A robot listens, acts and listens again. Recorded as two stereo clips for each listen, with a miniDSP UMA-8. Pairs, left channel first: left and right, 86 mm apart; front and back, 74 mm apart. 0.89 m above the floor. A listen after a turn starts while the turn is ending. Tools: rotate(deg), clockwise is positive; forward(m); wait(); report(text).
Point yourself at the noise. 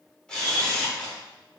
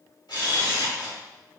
rotate(-10)
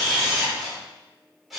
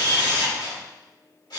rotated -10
report("Facing the camera shutter, 1 to 2 m away.")